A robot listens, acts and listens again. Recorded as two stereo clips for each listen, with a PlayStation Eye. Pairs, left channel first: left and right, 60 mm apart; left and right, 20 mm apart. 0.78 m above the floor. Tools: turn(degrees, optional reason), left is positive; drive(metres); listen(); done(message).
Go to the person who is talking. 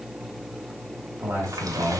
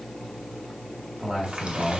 turn(degrees=-50, reason="The man speaking: about 50° right or 130° right.")
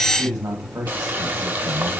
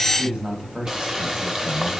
turn(degrees=-80, reason="So it is at 80° right.")
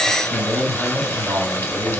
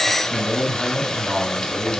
turn(degrees=-15, reason="The man speaking is now 15° right.")
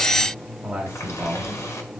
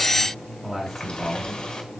drive(metres=1.0)
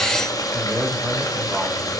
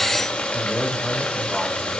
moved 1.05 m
drive(metres=1.0)
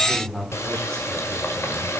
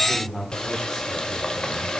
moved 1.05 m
turn(degrees=10, reason="The man speaking is now 10° left.")
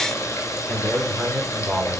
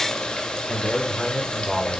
drive(metres=1.0)
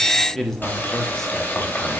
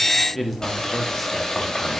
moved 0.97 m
drive(metres=1.0)
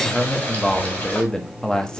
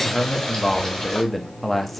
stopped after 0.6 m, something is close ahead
turn(degrees=15, reason="The man speaking is now 15° left.")
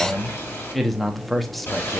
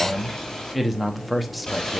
done("I am next to the man speaking.")